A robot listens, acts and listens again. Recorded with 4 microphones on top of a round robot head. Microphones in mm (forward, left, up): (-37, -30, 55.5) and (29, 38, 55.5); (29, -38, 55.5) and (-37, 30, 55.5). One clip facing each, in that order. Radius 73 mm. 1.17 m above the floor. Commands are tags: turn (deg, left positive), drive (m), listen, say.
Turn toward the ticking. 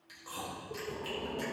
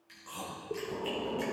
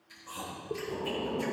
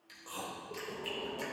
<listen/>
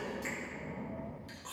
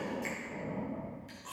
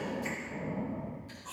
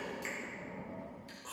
<listen/>
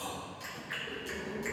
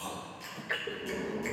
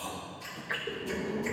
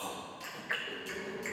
<turn deg="40"/>
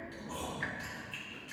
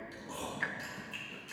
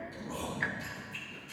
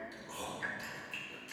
<say>Found it: ticking, straight ahead, under 1 m away.</say>